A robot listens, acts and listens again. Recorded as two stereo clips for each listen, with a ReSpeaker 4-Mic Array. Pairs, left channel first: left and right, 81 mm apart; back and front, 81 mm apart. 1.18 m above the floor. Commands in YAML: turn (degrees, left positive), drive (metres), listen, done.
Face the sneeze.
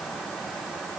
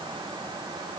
listen: true
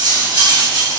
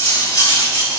listen: true
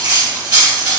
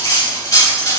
done: "I can't make out a sneeze to turn to."